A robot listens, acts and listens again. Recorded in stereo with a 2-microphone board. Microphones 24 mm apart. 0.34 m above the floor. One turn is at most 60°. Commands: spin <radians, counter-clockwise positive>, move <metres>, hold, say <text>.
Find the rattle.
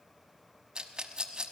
spin -0.61
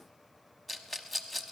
say Found it: a rattle, straight ahead.